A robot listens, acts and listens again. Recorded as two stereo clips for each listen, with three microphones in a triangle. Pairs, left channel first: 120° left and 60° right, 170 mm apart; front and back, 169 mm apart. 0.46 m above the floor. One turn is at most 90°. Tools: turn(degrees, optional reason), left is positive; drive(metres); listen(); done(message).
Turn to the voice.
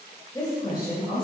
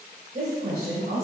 turn(degrees=90, reason="The woman speaking: straight behind.")
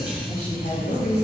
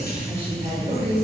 turn(degrees=90, reason="The woman speaking is now 130° left.")
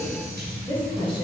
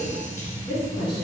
turn(degrees=60, reason="The woman speaking is now 60° left.")
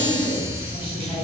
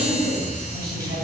listen()
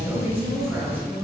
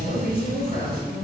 turn(degrees=20, reason="The woman speaking is now 20° left.")
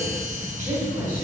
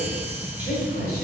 done("Found it: a woman speaking, straight ahead, over 4 m away.")